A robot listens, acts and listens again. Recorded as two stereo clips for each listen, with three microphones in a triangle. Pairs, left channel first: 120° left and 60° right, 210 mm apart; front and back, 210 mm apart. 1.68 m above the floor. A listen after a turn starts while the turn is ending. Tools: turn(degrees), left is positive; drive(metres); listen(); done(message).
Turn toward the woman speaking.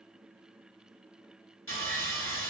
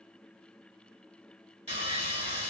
listen()
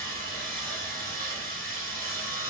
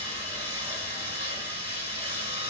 listen()
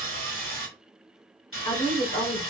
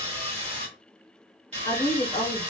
turn(degrees=55)
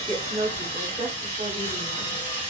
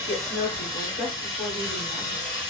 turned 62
done("Found it: a woman speaking, straight ahead.")